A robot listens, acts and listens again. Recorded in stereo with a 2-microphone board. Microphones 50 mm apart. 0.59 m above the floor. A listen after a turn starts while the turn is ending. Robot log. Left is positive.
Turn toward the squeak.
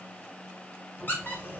note: The squeak: about 40° left or 140° left.
cmd yaw +40
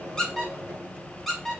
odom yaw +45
end: Found it: a squeak, straight ahead, 1 to 2 m away.